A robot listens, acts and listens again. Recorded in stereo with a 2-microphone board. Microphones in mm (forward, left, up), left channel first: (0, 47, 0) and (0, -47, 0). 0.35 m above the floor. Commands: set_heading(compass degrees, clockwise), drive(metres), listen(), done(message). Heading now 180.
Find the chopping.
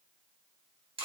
listen()
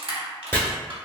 set_heading(155)
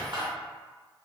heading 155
listen()
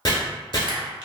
set_heading(25)
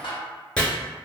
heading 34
set_heading(24)
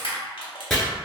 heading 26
done("Found it: chopping, straight ahead, under 1 m away.")